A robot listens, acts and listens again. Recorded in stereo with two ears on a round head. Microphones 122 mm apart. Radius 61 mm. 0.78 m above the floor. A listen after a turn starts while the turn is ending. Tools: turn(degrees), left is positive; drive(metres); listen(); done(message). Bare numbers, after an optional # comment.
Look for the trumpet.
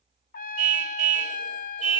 # The trumpet: about 60° left or 120° left.
turn(60)
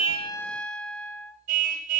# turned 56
done("Found it: a trumpet, straight ahead.")